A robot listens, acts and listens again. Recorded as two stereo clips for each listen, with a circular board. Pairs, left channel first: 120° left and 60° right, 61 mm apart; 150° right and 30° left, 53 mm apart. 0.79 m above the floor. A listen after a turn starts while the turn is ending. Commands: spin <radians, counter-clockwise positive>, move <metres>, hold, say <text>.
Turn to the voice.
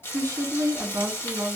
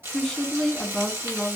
spin -1.05
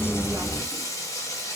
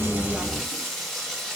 hold
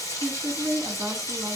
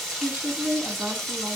spin -0.26
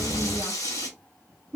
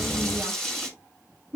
say Found it: a woman speaking, straight ahead.